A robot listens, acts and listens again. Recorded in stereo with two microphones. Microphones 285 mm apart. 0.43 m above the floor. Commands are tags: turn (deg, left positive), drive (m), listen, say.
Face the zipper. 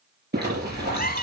<turn deg="-35"/>
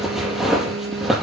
<say>Found it: a zipper, straight ahead, over 4 m away.</say>